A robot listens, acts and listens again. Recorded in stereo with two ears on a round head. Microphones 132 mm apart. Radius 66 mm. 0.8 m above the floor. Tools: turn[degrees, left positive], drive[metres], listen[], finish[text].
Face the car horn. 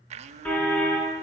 Action: turn[30]
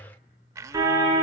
Thought: So it is at 20° right.
Action: turn[-20]
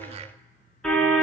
Action: finish[Found it: a car horn, straight ahead, over 4 m away.]